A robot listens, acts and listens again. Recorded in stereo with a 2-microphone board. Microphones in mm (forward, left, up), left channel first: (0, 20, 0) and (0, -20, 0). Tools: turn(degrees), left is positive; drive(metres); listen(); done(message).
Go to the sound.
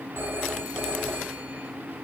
turn(degrees=-70)
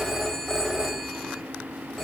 drive(metres=1.0)
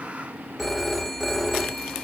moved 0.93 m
drive(metres=1.0)
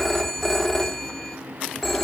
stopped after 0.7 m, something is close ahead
turn(degrees=10)
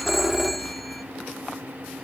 done("I am next to the phone ringing.")